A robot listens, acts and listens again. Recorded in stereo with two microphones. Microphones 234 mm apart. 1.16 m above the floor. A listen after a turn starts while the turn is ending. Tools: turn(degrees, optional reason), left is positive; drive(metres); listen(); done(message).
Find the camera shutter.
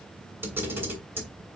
turn(degrees=-30)
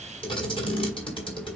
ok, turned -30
turn(degrees=20, reason="So it is at 20° left.")
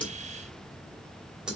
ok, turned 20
done("Facing the camera shutter, 2 to 4 m away.")